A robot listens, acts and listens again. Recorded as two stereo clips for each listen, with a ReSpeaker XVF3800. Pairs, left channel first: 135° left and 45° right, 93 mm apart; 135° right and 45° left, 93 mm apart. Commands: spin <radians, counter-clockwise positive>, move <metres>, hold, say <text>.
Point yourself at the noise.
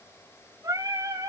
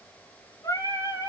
spin -1.57
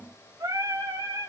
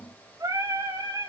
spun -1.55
say Found it: singing, straight ahead, over 4 m away.